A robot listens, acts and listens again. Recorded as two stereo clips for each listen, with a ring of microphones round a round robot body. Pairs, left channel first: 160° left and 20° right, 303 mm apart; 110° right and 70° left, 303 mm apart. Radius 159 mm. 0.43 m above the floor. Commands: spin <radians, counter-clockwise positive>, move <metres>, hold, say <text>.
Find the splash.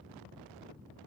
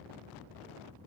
hold
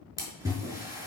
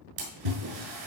spin 1.05
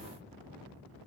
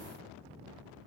say I heard a splash from this way, but can't make it out now.